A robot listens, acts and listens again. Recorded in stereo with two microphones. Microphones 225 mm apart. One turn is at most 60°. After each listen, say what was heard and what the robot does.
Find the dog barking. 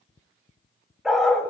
Turn 30° left.
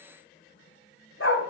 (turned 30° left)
So it is at 120° left. Turn 60° left.
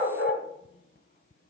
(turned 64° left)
The dog barking is now 40° left. Turn 40° left.
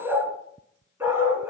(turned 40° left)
The dog barking is now 10° right. Turn 10° right.
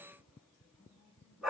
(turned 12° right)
Found it: a dog barking, straight ahead, 2 to 4 m away.